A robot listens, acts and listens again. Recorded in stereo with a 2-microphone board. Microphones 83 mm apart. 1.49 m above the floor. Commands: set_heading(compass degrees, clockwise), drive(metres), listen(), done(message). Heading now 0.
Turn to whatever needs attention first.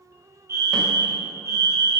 set_heading(35)
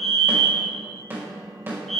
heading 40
done("Facing the fire alarm, 1 to 2 m away.")